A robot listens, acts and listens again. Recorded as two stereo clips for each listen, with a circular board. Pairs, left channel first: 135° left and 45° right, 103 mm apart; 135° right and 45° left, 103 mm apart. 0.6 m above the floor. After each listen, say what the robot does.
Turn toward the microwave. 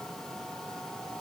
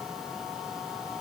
Keep listening.
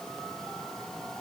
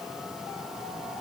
Keep listening.
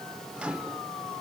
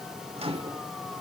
Turn 35° left.
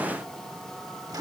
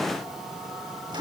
Found it: a microwave, straight ahead.